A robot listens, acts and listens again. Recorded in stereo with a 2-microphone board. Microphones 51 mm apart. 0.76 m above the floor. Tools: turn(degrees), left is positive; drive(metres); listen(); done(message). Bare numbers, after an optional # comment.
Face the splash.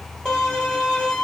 listen()
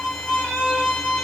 listen()
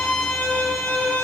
done("I can't make out a splash to turn to.")